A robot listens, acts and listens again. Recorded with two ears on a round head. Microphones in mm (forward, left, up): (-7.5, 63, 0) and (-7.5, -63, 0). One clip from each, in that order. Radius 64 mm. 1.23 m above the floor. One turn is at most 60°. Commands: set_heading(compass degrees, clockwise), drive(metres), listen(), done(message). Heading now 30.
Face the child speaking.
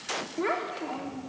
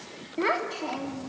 set_heading(90)
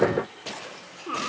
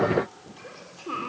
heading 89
set_heading(79)
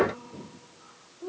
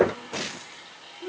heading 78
done("Found it: a child speaking, straight ahead, 2 to 4 m away.")